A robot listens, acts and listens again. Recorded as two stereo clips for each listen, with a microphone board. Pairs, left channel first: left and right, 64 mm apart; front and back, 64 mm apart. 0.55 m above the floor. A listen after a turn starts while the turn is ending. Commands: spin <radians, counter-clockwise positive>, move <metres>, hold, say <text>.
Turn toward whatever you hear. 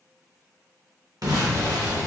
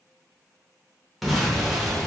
spin -1.57
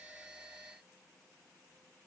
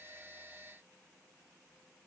say Facing where the explosion came from. I can't hear it now.